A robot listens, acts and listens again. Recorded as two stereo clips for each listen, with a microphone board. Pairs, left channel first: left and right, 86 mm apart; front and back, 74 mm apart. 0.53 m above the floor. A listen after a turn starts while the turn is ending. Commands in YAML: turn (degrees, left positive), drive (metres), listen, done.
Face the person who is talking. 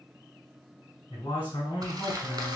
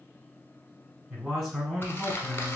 turn: 95
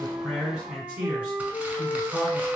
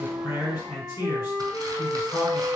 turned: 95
turn: -10
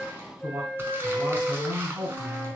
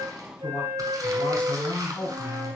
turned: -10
done: "Facing the man speaking."